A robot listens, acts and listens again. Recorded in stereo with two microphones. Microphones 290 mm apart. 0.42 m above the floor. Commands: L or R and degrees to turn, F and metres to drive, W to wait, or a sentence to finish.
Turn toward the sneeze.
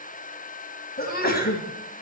L30
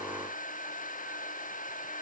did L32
W
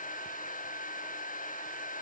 I heard a sneeze, but can't make it out now. It was about straight ahead or 115° left.